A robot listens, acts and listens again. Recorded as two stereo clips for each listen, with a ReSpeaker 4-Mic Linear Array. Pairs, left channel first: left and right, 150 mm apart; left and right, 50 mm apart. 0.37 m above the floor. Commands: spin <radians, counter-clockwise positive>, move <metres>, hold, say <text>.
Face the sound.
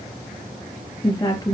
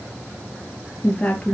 spin 0.35
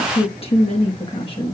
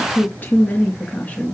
spin 0.61
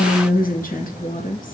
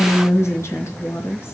spin 2.09
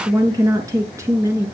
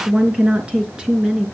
spin -0.26
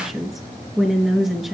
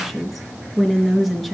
say Facing the woman speaking.